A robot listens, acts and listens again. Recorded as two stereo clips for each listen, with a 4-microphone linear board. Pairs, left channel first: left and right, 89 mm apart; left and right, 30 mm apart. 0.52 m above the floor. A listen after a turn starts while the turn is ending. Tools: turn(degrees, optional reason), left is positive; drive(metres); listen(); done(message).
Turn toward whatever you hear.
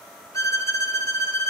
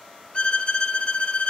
turn(degrees=35, reason="The violin: about 35° left or 145° left.")
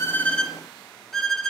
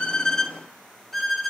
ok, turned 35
done("Facing the violin, 1 to 2 m away.")